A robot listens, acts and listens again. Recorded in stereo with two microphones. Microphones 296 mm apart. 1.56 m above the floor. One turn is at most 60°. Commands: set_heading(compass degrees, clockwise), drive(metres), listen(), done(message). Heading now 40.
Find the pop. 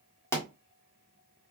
set_heading(10)
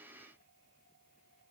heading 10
listen()
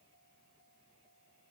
done("I heard a pop, but can't make it out now. It was about 20° right or 140° left.")